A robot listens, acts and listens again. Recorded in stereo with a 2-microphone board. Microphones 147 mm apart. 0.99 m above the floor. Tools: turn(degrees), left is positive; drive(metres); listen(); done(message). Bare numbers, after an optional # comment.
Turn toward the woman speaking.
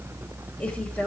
turn(30)
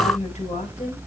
# So it is at 125° left.
turn(125)
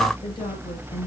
# The woman speaking is now 30° left.
turn(30)
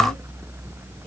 listen()
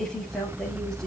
done("Found it: a woman speaking, straight ahead, over 4 m away.")